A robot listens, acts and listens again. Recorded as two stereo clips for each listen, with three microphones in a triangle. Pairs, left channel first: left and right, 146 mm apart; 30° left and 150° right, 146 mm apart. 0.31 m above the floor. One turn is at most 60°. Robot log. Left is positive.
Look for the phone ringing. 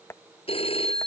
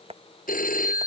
note: The phone ringing: 40° left.
cmd yaw +40
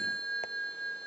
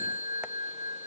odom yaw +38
end: Facing the phone ringing.